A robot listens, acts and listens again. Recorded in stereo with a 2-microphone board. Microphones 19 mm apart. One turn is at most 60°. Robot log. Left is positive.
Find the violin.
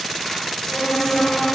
note: The violin: about 75° left or 105° left.
cmd yaw +60
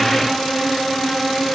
note: So it is at 45° left.
cmd yaw +45
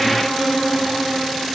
end: Facing the violin, over 4 m away.